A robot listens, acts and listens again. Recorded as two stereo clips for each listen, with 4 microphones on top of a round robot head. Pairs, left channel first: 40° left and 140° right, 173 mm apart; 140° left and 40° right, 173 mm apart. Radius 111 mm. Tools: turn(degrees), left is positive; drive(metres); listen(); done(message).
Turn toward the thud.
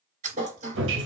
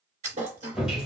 turn(degrees=-90)
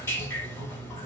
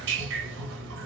done("I heard a thud from this way, but can't make it out now.")